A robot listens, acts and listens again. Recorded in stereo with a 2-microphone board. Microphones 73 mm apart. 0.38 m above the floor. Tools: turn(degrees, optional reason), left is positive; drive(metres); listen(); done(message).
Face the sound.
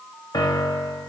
turn(degrees=65, reason="The piano: about 65° left or 115° left.")
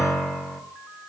turn(degrees=10, reason="So it is at 10° left.")
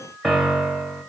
done("Found it: a piano, straight ahead.")